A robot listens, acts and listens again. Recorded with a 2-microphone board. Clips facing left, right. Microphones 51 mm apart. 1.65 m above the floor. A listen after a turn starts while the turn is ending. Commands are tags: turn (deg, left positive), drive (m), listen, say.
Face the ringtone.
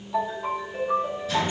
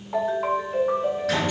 <turn deg="-55"/>
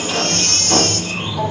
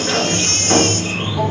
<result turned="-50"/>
<listen/>
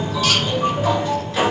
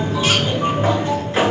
<say>Facing the ringtone, over 4 m away.</say>